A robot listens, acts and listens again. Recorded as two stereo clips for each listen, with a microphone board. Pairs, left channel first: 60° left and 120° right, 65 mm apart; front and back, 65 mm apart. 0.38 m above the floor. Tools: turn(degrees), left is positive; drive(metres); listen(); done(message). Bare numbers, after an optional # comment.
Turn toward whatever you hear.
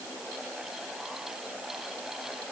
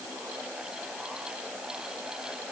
listen()
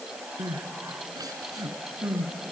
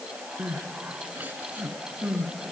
# The crying: 115° right.
turn(-115)
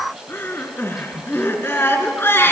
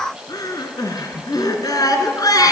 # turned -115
# The crying is now 10° left.
turn(10)
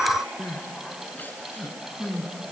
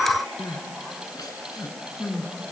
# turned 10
done("Found it: crying, straight ahead.")